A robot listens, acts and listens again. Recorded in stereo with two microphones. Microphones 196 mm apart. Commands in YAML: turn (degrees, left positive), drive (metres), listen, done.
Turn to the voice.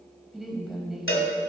turn: 30
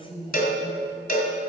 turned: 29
turn: 155
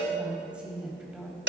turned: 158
done: "Found it: a woman speaking, straight ahead."